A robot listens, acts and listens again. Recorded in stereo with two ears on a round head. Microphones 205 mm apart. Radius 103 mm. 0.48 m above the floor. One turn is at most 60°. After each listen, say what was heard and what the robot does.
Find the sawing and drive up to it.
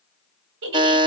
Keep listening.
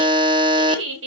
Keep listening.
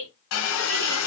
The sawing: about 65° left or 115° left. Turn 60° left.
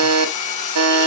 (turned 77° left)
So it is at 35° left. Turn 35° left.
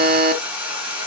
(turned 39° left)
Drive 1.0 m forward.
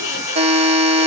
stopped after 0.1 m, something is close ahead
The sawing is now 15° right. Turn 15° right.
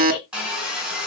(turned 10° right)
Something is in my way. I am facing the sawing but have not reached it.